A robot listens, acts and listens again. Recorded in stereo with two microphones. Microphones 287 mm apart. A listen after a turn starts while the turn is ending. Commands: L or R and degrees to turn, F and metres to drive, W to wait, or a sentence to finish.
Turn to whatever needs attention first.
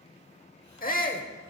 L30
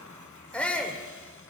Found it: a shout, straight ahead, 1 to 2 m away.